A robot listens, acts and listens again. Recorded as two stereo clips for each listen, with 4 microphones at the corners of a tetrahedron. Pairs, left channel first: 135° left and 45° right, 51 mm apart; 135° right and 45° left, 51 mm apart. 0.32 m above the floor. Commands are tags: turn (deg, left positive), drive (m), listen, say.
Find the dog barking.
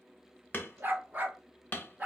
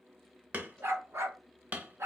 <turn deg="20"/>
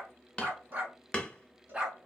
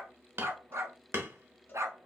<turn deg="30"/>
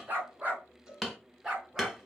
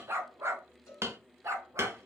<turn deg="30"/>
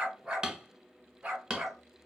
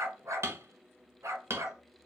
<turn deg="25"/>
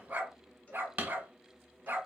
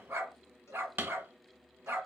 <say>Facing the dog barking, 1 to 2 m away.</say>